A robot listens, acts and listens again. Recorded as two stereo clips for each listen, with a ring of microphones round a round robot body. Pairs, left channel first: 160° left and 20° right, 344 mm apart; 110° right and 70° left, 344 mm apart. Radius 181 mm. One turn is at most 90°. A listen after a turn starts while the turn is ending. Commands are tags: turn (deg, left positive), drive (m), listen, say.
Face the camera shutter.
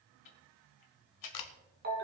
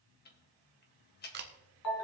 <turn deg="90"/>
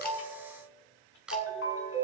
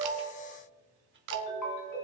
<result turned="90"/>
<turn deg="65"/>
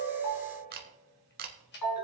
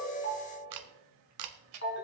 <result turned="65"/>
<turn deg="40"/>
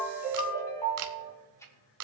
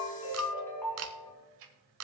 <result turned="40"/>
<turn deg="20"/>
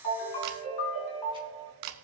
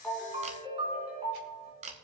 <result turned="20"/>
<say>Found it: a camera shutter, straight ahead, 1 to 2 m away.</say>